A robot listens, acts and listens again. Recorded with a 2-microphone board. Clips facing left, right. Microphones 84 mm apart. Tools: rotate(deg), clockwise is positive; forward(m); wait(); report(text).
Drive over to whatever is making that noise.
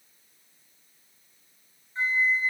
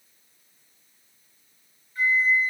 rotate(-30)
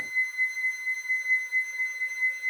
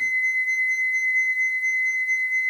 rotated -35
rotate(-115)
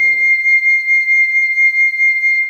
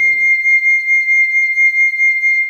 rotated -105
rotate(-10)
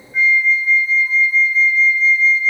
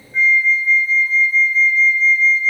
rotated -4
forward(1.0)
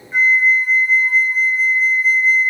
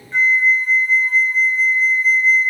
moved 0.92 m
forward(1.0)
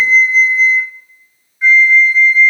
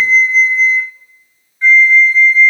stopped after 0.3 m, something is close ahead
report("Arrived at the flute, straight ahead.")